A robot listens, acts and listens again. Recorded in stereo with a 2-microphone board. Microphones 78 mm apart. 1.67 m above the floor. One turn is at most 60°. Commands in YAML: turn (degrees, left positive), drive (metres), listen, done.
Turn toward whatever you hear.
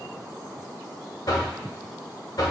turn: 60
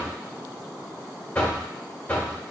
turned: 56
turn: 30
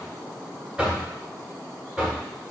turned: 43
turn: -15
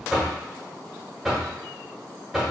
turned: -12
done: "Found it: knocking, straight ahead, 1 to 2 m away."